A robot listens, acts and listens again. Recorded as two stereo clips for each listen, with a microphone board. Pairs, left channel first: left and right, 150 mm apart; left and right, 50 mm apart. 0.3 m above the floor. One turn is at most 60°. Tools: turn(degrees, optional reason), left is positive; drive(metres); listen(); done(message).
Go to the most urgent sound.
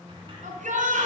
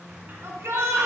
turn(degrees=-60, reason="The shout: about 60° right or 120° right.")
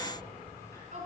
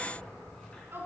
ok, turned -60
turn(degrees=-60, reason="So it is at 60° right.")
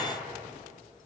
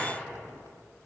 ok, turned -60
listen()
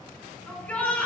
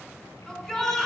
turn(degrees=10, reason="The shout is now 10° left.")
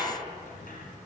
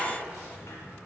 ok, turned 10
listen()
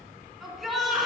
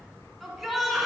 drive(metres=1.0)
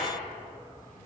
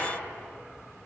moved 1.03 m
listen()
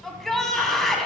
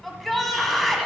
drive(metres=1.0)
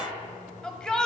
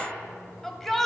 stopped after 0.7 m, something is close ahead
done("Arrived at the shout, straight ahead.")